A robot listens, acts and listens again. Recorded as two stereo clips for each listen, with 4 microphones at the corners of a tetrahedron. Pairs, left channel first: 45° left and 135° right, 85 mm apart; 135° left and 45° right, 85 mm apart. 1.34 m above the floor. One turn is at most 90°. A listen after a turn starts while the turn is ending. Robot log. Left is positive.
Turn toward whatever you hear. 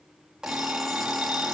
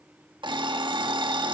note: The alarm clock: 50° right.
cmd yaw -50
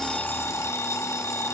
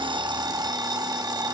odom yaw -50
note: The alarm clock is now 10° right.
cmd yaw -10
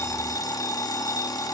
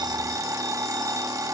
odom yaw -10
end: Facing the alarm clock.